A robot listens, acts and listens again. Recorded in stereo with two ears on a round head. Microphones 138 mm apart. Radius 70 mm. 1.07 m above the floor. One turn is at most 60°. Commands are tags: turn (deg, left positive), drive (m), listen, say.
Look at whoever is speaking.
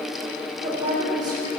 <turn deg="-30"/>
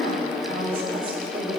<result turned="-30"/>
<turn deg="-60"/>
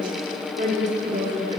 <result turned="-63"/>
<turn deg="-45"/>
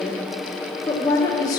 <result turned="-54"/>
<turn deg="25"/>
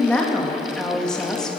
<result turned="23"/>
<say>Found it: a woman speaking, straight ahead.</say>